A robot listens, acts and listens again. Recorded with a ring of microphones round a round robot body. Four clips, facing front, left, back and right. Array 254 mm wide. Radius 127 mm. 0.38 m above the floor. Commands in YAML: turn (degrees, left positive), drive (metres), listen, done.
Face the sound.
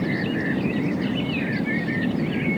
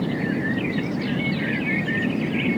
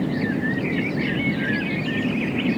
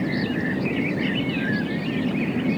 listen: true
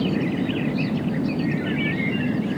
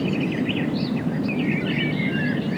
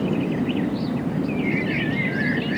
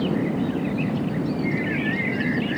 listen: true
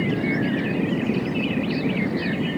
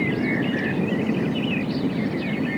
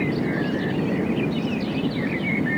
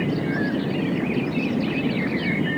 done: "I can't make out anything to turn to."